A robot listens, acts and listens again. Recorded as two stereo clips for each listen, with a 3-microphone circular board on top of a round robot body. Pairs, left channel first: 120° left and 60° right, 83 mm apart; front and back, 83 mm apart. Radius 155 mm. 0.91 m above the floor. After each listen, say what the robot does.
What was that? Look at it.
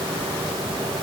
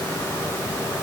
Keep listening.
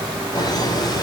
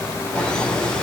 Turn 80° left.
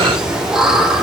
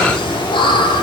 Turn 25° left.
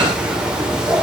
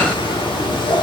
Turn 20° left.
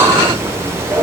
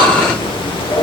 Found it: laughter, straight ahead.